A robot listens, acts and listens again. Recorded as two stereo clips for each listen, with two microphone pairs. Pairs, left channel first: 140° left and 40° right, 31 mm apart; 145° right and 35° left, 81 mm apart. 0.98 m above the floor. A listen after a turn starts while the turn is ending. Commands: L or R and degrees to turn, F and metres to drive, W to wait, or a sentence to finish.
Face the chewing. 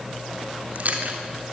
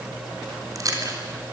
R10
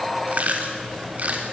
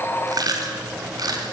Facing the chewing.